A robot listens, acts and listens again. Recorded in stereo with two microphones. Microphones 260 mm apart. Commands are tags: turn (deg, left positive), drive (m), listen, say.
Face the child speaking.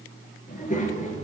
<turn deg="25"/>
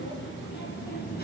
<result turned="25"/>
<turn deg="35"/>
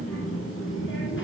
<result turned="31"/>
<turn deg="130"/>
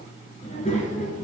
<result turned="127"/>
<turn deg="30"/>
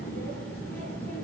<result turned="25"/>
<say>Found it: a child speaking, straight ahead.</say>